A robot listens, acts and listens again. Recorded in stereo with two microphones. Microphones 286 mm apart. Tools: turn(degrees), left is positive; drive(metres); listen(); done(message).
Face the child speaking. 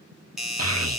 turn(degrees=-55)
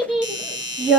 done("Found it: a child speaking, straight ahead, under 1 m away.")